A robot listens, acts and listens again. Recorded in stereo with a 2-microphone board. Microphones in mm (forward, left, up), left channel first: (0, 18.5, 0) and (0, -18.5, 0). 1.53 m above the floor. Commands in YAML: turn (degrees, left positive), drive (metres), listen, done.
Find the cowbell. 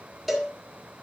turn: 30
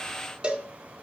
turn: -30
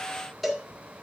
done: "Facing the cowbell, 1 to 2 m away."